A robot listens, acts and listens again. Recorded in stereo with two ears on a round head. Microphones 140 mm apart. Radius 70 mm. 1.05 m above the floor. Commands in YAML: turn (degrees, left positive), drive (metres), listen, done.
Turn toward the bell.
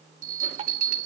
turn: -60
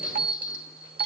turn: -10
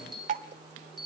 done: "Facing the bell."